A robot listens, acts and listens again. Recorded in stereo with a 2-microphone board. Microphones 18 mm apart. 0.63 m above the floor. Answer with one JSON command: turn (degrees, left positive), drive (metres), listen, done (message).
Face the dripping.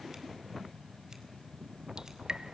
{"turn": -55}
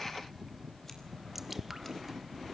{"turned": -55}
{"turn": -15}
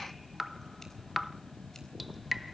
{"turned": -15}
{"done": "Found it: dripping, straight ahead."}